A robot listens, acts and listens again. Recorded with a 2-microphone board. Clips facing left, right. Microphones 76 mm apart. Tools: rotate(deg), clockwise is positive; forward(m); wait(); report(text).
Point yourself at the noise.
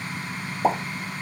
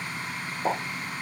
rotate(-60)
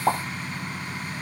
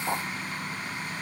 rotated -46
rotate(-65)
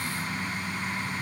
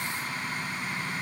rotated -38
rotate(-30)
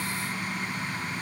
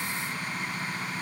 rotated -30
report("I heard a pop from this way, but can't make it out now.")